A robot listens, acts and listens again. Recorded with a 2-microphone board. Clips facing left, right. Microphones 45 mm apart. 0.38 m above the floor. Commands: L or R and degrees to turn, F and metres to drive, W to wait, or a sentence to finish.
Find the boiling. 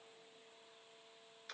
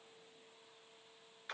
W
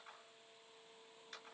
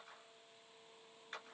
W
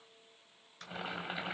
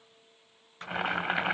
R70
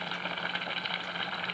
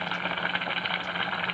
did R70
R30
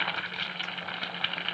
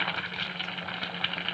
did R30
Facing the boiling, 1 to 2 m away.